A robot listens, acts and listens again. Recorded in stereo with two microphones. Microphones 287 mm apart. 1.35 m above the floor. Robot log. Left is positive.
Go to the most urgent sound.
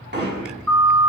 note: The siren: about 70° right or 110° right.
cmd yaw -70
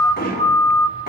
note: So it is at 45° right.
cmd yaw -45
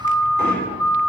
note: The siren is now 10° left.
cmd yaw +10
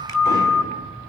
cmd fwd 1.0
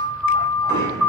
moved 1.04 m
cmd fwd 1.0
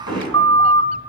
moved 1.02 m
note: The siren is now 15° left.
cmd yaw +15
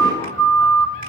cmd fwd 1.0
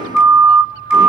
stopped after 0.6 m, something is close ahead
end: I am next to the siren.